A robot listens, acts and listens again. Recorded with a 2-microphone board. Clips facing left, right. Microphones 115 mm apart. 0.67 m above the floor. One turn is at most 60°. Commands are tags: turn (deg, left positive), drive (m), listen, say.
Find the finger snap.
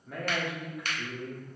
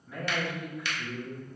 <turn deg="45"/>
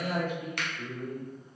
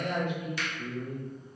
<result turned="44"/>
<turn deg="60"/>
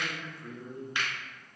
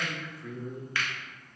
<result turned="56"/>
<turn deg="20"/>
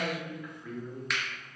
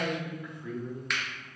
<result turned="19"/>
<say>Found it: a finger snap, straight ahead.</say>